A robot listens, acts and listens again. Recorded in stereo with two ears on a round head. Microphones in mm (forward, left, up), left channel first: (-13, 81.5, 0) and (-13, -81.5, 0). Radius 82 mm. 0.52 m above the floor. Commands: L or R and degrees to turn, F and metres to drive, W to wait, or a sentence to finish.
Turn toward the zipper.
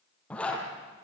L30
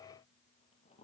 W
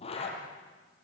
L145
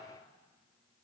W
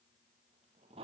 R30
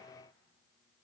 W
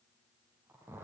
R15
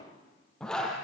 Facing the zipper.